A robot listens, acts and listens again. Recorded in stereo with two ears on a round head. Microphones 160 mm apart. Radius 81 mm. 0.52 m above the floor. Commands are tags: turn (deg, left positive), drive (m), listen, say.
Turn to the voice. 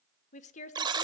<turn deg="40"/>
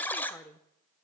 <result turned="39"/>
<turn deg="10"/>
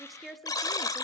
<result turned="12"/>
<say>Facing the woman speaking.</say>